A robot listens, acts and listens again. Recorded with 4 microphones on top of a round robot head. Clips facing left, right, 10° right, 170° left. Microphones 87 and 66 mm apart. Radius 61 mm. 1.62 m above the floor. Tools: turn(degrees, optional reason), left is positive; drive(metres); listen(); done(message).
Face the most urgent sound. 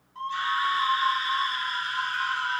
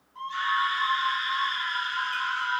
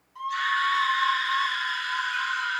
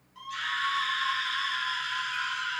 turn(degrees=10, reason="The scream: 10° left.")
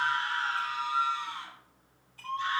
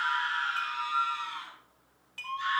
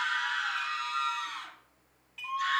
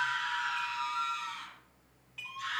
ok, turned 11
done("Found it: a scream, straight ahead.")